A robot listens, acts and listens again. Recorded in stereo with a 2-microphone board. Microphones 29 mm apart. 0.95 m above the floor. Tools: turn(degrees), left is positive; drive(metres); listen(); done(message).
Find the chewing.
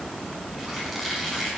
listen()
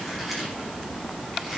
listen()
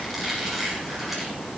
done("I can't make out chewing to turn to.")